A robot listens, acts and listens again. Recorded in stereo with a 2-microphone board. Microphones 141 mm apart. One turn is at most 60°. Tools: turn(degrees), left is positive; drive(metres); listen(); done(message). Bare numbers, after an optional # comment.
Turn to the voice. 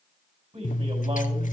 # The man speaking: about 55° right or 125° right.
turn(-55)
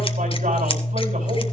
listen()
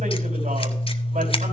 listen()
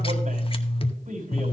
# So it is at 60° right.
turn(-60)
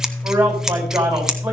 # The man speaking is now 15° right.
turn(-15)
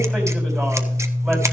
listen()
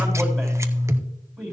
done("Found it: a man speaking, straight ahead.")